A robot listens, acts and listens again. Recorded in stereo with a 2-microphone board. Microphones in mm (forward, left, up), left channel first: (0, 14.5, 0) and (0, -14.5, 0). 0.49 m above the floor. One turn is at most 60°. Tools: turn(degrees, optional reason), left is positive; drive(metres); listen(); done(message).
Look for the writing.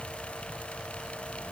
listen()
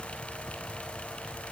listen()
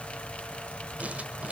turn(degrees=-55, reason="The writing: about 55° right or 125° right.")
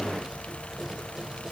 listen()
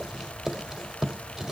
turn(degrees=-20, reason="So it is at 20° right.")
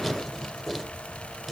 done("Found it: writing, straight ahead.")